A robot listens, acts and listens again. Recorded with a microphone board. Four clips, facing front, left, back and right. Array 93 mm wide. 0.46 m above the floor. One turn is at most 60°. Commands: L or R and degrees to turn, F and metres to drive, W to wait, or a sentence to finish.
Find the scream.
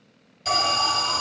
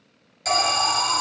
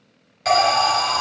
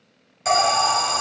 W
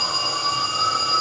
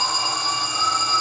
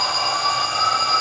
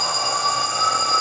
W
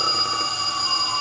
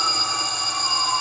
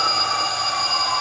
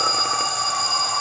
I can't make out a scream, only an alarm.